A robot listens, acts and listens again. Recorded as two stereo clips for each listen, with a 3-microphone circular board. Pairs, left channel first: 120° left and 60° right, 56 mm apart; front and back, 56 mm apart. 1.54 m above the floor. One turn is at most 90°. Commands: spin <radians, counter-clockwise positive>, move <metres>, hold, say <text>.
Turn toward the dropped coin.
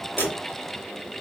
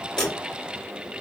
spin 1.31
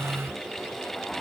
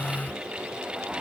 say Facing where the dropped coin came from. I can't hear it now.